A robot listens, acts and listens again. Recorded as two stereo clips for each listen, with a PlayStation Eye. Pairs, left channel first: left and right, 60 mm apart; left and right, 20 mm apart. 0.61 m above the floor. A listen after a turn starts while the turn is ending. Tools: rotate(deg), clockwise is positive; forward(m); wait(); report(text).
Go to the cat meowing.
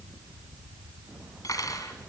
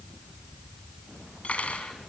wait()
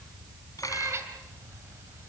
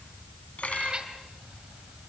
rotate(45)
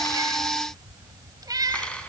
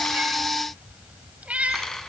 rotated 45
rotate(90)
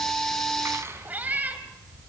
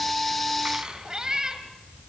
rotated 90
rotate(30)
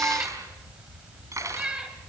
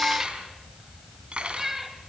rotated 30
rotate(15)
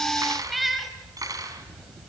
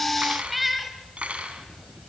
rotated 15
forward(1.0)
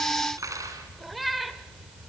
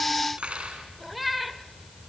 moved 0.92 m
forward(1.0)
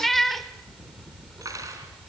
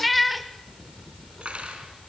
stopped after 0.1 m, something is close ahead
report("I am next to the cat meowing.")